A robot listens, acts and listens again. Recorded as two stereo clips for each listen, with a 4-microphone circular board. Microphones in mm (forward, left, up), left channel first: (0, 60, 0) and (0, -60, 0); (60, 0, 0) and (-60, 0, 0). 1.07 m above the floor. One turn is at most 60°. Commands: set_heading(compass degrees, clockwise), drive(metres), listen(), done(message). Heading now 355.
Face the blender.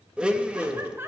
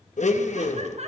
set_heading(5)
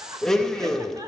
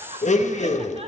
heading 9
done("Found it: a blender, straight ahead.")